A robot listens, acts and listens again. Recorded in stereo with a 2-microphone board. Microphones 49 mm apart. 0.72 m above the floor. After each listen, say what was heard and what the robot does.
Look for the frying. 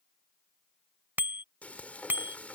The frying: about 30° left or 150° left. Turn 30° left.
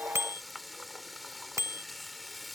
Found it: frying, straight ahead.